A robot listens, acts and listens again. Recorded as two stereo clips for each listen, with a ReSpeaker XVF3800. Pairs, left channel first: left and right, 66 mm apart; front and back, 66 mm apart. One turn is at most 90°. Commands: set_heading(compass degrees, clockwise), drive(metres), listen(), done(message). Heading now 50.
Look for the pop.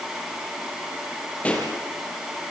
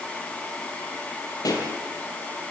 set_heading(35)
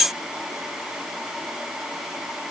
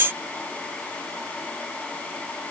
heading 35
done("I heard a pop from this way, but can't make it out now.")